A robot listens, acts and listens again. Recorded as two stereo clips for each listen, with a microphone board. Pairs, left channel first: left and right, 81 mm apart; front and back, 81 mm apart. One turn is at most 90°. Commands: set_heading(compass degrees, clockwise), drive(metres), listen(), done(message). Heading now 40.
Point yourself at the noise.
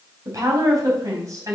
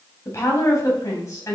set_heading(85)
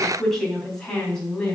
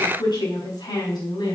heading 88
set_heading(78)
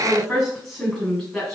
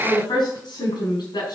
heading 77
done("Facing the woman speaking, over 4 m away.")